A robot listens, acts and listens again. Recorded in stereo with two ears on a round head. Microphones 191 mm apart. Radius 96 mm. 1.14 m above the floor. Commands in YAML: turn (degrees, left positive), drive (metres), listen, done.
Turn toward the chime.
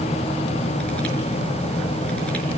listen: true
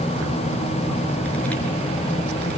listen: true
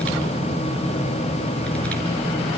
done: "I can't make out a chime."